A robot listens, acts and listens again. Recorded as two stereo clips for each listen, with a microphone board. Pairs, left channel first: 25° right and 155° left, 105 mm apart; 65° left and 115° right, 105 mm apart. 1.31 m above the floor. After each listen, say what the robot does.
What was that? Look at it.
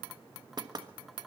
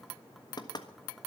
Turn 115° left.
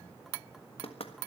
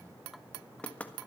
Turn 10° right.
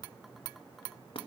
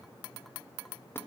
Keep listening.
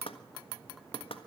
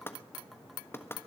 Found it: knocking, straight ahead.